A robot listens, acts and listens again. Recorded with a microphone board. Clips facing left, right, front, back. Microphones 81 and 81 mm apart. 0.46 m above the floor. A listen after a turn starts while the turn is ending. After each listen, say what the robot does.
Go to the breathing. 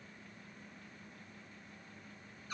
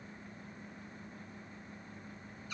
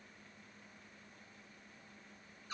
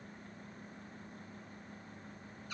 Keep listening.
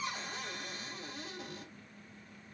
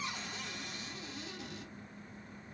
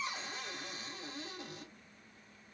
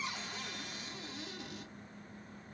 Keep listening.
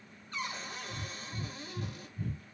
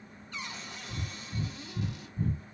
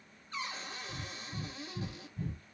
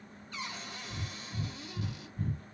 Turn 45° right.
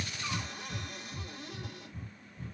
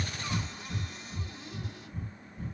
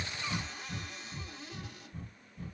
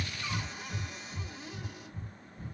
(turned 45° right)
Drive 1.0 m forward.
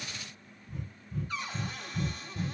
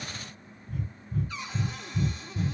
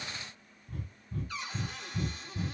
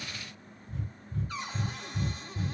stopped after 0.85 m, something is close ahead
I am next to the breathing.